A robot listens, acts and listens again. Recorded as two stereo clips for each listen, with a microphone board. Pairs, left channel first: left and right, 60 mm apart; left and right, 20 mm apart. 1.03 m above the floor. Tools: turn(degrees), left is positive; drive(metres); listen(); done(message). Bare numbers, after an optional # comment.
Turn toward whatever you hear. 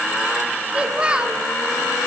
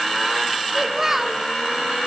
# The child speaking: about 15° right or 165° right.
turn(-15)
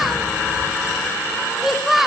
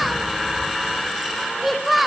done("Facing the child speaking.")